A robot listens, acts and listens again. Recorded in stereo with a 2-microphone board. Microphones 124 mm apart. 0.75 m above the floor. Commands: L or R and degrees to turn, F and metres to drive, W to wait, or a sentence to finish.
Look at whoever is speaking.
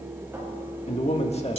L60
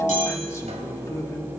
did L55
L30
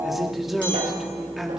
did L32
Found it: a man speaking, straight ahead, 1 to 2 m away.